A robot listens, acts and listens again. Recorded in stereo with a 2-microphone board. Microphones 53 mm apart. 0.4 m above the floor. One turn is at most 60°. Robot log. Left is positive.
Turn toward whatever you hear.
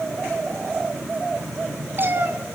note: The cat meowing: about 40° right or 140° right.
cmd yaw -40
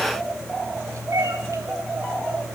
note: So it is at 100° right.
cmd yaw -60
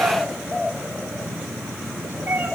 note: The cat meowing is now 35° right.
cmd yaw -35
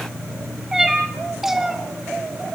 end: Found it: a cat meowing, straight ahead.